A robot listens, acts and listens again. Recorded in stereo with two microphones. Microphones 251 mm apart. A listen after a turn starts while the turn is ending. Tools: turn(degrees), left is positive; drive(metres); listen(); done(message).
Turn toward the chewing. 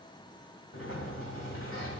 listen()
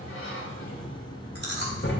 turn(degrees=-45)
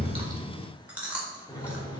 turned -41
done("Found it: chewing, straight ahead, 1 to 2 m away.")